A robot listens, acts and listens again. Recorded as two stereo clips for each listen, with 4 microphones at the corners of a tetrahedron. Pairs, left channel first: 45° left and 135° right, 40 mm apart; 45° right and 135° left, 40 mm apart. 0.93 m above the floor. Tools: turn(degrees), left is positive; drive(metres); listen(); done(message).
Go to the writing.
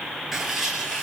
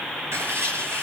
turn(degrees=145)
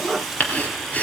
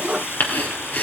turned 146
drive(metres=1.0)
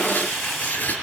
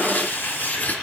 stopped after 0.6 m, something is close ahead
done("Blocked. The writing is further on, straight ahead.")